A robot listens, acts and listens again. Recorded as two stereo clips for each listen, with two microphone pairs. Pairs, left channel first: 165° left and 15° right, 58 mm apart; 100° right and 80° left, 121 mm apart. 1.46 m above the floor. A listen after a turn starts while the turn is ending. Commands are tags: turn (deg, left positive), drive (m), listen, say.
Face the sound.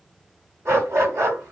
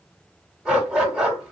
<say>Found it: a dog barking, straight ahead, 1 to 2 m away.</say>